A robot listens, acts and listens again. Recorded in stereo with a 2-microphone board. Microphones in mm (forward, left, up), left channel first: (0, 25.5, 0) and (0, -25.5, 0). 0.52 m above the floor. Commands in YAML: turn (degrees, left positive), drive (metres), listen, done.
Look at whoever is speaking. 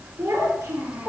turn: -90
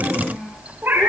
done: "Facing the child speaking."